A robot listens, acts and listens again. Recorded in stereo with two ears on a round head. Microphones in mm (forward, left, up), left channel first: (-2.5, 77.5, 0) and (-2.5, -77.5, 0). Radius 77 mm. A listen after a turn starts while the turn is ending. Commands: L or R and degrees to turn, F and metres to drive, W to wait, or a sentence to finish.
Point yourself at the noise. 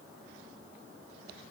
W
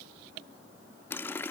L30
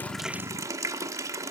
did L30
R20
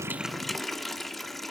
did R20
Found it: a running tap, straight ahead.